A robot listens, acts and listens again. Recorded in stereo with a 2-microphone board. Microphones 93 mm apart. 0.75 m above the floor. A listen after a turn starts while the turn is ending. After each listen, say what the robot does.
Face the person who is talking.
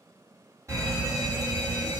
Keep listening.
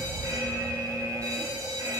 Keep listening.
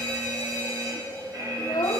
Turn 45° left.
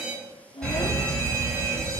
Turn 90° left.
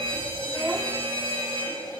Keep listening.
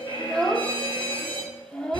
Turn 10° left.
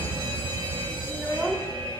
Keep listening.
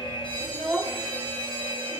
Facing the child speaking.